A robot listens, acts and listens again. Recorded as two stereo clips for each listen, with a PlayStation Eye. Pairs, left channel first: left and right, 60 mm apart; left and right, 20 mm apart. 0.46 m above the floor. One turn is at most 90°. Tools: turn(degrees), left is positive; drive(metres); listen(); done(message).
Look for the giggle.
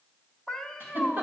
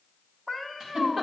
turn(degrees=-45)
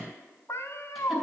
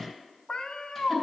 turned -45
listen()
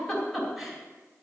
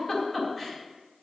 done("Facing the giggle, 2 to 4 m away.")